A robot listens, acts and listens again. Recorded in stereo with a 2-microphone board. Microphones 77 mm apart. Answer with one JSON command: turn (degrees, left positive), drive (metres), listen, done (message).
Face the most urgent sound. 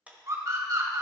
{"turn": -50}
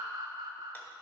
{"turn": -70}
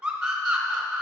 {"turn": -10}
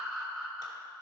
{"done": "Found it: a scream, straight ahead, 2 to 4 m away."}